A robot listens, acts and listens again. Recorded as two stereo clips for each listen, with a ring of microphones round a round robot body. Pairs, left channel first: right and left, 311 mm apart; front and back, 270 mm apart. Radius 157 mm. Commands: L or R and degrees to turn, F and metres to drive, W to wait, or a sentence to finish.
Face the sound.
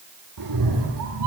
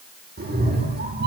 L125
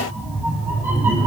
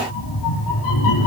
Facing the cat meowing.